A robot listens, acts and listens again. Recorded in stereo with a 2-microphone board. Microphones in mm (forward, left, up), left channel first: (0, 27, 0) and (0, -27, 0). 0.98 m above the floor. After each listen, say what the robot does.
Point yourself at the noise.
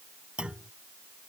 Turn 20° right.
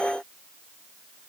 Keep listening.
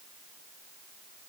I heard a clunk, but can't make it out now. It was about straight ahead or 140° right.